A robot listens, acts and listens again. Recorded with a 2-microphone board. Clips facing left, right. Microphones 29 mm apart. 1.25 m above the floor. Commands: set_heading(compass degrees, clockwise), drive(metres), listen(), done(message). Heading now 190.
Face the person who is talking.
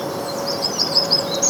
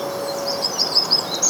listen()
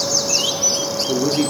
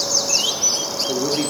set_heading(160)
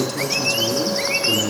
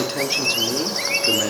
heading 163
set_heading(188)
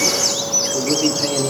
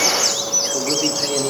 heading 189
done("Found it: a man speaking, straight ahead, 2 to 4 m away.")